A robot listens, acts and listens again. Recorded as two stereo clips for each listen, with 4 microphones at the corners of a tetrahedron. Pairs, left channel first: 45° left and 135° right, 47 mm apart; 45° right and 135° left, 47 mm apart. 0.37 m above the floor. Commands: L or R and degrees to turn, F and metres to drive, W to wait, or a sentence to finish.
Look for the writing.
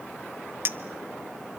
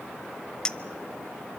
W
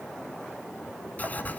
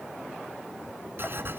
L105
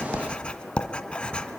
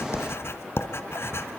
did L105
R20
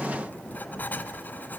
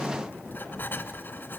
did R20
Facing the writing.